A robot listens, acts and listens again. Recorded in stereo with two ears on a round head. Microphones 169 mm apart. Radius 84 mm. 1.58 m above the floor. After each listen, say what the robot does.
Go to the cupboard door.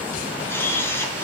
Keep listening.
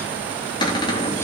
Turn 25° left.
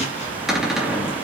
Drive 1.0 m forward.
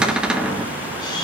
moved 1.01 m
Drive 1.0 m forward.
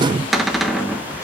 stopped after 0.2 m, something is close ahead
Arrived at the cupboard door, straight ahead.